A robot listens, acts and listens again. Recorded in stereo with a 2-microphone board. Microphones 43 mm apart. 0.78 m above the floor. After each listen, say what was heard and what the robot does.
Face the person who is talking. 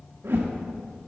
Keep listening.
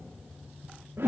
Keep listening.
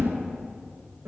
I can't make out anyone speaking to turn to.